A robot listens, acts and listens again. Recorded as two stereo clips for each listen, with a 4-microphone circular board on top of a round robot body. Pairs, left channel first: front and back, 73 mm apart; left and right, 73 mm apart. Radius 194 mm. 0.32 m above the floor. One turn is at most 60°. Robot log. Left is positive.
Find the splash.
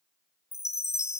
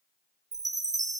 cmd idle
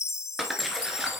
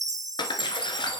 note: The splash: 90° left.
cmd yaw +60
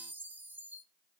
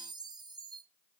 note: Nothing new. It was at 30° left.
cmd yaw +30
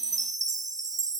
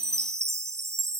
end: Facing where the splash came from. I can't hear it now.